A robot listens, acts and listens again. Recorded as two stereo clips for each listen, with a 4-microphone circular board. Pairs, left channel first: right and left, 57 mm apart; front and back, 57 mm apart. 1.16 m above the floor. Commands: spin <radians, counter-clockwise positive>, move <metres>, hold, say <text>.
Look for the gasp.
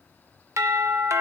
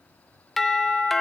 hold
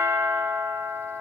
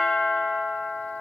hold
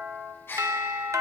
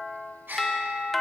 spin -2.27
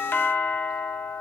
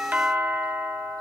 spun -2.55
spin 0.26
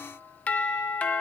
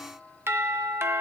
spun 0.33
say I heard a gasp from this way, but can't make it out now.